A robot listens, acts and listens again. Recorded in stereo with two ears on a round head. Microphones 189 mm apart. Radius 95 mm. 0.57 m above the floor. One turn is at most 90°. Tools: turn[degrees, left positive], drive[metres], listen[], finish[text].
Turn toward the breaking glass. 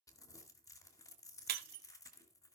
Thought: The breaking glass: about 50° right or 130° right.
Action: turn[-50]
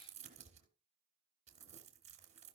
Action: listen[]
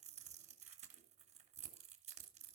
Action: finish[I heard breaking glass, but can't make it out now. It was about straight ahead or 80° right.]